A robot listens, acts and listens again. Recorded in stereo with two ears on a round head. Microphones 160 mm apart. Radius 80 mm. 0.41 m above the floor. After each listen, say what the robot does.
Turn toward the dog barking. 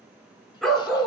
Turn 30° left.
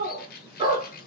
Turn 25° right.
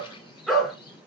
Found it: a dog barking, straight ahead.